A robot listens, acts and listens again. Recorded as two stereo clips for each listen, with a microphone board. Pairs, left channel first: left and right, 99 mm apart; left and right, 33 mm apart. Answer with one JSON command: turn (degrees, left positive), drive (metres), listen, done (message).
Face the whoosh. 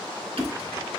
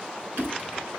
{"turn": -25}
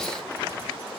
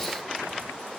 {"listen": true}
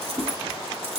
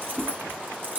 {"turn": -130}
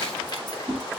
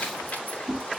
{"done": "Found it: a whoosh, straight ahead, 2 to 4 m away."}